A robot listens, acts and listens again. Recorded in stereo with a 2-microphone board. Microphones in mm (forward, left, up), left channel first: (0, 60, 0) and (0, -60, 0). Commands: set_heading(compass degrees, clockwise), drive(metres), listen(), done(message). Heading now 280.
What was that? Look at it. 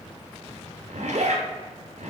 set_heading(10)
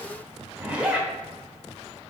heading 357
set_heading(7)
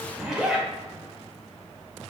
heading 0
done("Found it: a zipper, straight ahead, 1 to 2 m away.")